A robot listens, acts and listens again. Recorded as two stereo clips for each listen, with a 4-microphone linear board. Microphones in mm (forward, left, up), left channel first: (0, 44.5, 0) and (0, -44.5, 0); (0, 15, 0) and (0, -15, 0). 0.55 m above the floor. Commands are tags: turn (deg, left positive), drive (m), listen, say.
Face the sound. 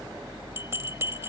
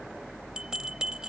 <turn deg="-30"/>
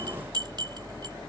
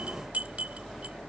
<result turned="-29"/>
<turn deg="-120"/>
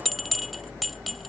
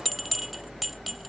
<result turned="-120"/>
<say>Found it: a bell, straight ahead.</say>